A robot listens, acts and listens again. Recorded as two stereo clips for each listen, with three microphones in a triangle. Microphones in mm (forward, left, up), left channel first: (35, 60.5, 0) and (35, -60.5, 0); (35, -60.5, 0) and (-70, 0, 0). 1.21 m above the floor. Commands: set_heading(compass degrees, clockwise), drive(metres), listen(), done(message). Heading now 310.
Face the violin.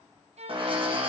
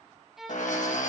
set_heading(70)
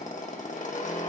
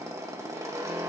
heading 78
listen()
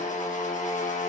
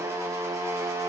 listen()
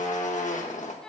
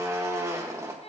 done("Facing the violin, under 1 m away.")